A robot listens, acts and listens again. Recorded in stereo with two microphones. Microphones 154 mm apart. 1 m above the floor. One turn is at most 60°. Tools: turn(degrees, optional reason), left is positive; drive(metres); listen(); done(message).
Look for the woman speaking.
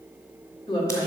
turn(degrees=30, reason="The woman speaking: about 30° left or 150° left.")
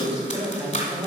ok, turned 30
turn(degrees=-15, reason="So it is at 15° right.")
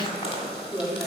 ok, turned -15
turn(degrees=-10, reason="The woman speaking is now 10° right.")
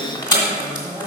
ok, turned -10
done("Found it: a woman speaking, straight ahead.")